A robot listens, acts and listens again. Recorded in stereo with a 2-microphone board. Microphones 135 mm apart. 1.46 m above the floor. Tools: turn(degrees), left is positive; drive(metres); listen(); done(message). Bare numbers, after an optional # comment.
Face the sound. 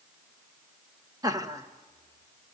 # The laughter: about 25° right or 155° right.
turn(-25)
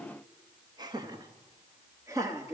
# The laughter: about 25° right or 155° right.
turn(-25)
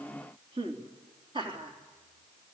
# So it is at 140° right.
turn(-140)
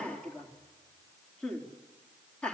# The laughter is now 10° left.
turn(10)
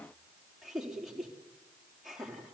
done("Found it: laughter, straight ahead.")